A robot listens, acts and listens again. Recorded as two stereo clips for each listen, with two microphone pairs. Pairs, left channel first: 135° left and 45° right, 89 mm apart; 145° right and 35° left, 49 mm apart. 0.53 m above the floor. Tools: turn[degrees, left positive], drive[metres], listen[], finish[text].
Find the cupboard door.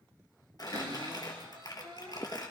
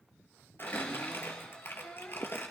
Thought: The cupboard door: 80° right.
Action: turn[-80]
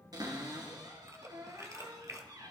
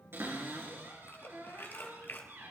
Action: finish[Found it: a cupboard door, straight ahead.]